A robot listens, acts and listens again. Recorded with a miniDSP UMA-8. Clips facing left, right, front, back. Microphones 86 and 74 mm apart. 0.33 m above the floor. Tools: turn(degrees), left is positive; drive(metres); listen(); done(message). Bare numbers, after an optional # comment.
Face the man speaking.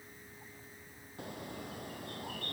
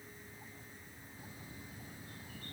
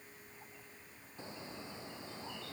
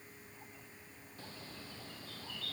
listen()
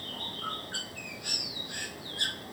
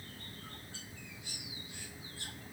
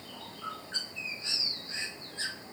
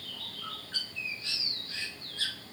listen()
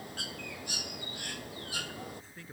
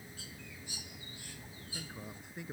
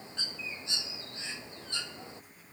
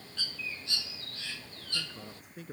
# The man speaking: 165° right.
turn(-165)
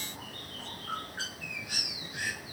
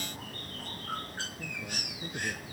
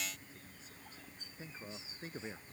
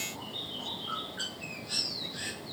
listen()
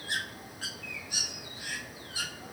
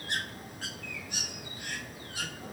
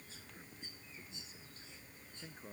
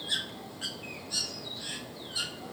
listen()
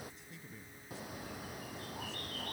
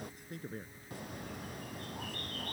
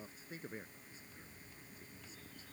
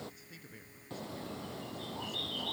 # The man speaking is now 55° right.
turn(-55)
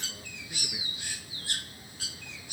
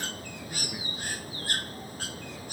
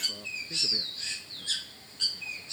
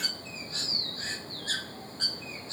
listen()
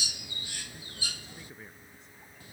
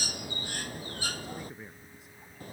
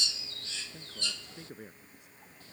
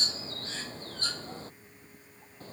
done("Facing the man speaking.")